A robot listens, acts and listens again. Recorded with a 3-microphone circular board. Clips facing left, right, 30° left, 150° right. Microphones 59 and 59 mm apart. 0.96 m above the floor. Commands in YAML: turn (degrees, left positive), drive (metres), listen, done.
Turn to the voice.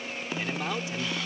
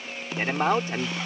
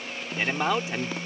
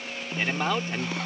turn: -50
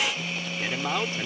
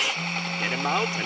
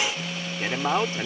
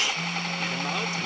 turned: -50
turn: -20
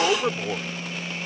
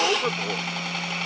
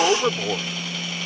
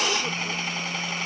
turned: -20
done: "Facing the man speaking."